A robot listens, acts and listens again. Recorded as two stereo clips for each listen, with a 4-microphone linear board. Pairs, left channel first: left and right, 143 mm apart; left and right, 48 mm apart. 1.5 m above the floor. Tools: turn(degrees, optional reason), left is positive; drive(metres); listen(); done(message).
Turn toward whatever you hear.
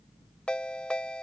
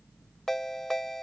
turn(degrees=30)
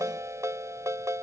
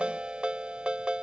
turn(degrees=-20, reason="So it is at 20° right.")
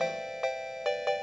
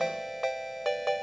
done("Found it: a ringtone, straight ahead.")